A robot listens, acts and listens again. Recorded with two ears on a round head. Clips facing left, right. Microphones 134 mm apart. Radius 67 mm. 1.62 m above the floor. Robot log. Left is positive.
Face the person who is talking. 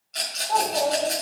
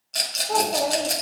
note: The child speaking: about 65° right or 115° right.
cmd yaw -65
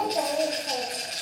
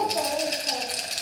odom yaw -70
note: So it is at 15° left.
cmd yaw +15
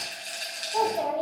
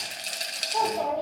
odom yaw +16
note: The child speaking is now 25° left.
cmd yaw +25
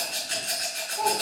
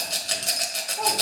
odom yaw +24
cmd idle
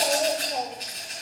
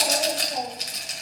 cmd idle
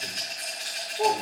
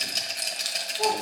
note: The child speaking is now 15° left.
cmd yaw +15
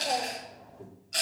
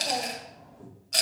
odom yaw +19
end: Facing the child speaking.